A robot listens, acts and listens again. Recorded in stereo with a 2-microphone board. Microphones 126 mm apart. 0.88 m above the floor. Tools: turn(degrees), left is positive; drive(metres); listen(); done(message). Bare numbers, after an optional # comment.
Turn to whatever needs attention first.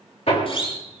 # The siren: about 50° left or 130° left.
turn(50)
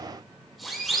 done("Found it: a siren, straight ahead.")